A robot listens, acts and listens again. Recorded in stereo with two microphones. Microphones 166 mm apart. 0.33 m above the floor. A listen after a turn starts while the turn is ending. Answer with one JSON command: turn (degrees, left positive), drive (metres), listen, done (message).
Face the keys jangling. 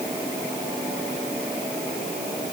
{"listen": true}
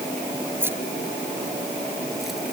{"turn": -30}
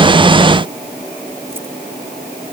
{"listen": true}
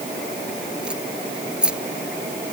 {"turn": -30}
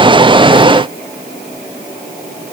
{"listen": true}
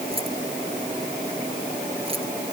{"turn": -145}
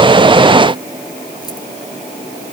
{"listen": true}
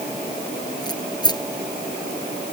{"turn": 25}
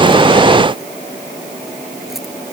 {"listen": true}
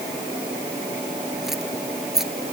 {"done": "Found it: keys jangling, straight ahead."}